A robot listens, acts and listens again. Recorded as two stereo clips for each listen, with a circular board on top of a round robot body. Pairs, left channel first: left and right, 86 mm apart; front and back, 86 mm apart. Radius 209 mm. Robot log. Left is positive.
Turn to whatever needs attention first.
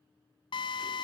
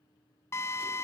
cmd idle
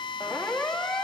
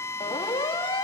end: Found it: a siren, straight ahead, 2 to 4 m away.